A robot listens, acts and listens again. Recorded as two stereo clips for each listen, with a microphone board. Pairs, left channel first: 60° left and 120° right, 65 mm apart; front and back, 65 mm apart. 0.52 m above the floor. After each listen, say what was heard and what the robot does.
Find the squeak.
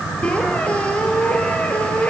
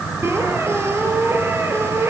The squeak: 135° left. Turn 135° left.
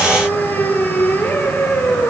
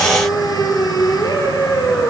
Facing the squeak, 2 to 4 m away.